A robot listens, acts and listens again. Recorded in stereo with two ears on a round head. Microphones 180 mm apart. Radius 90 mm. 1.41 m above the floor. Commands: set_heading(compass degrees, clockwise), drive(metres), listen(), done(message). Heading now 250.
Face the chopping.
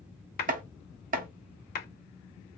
set_heading(295)
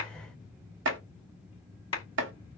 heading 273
set_heading(23)
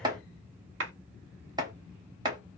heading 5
set_heading(25)
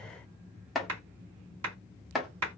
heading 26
done("Found it: chopping, straight ahead, 1 to 2 m away.")